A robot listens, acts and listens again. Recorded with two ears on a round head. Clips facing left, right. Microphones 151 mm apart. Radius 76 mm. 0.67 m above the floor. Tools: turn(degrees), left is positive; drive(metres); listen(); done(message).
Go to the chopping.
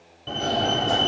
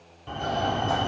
listen()
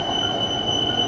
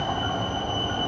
listen()
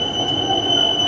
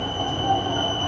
done("I can't make out chopping, only a fire alarm.")